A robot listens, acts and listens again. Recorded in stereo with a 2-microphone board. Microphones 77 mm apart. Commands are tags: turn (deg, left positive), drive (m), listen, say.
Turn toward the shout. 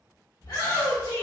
<turn deg="65"/>
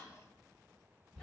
<turn deg="10"/>
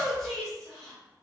<say>Found it: a shout, straight ahead.</say>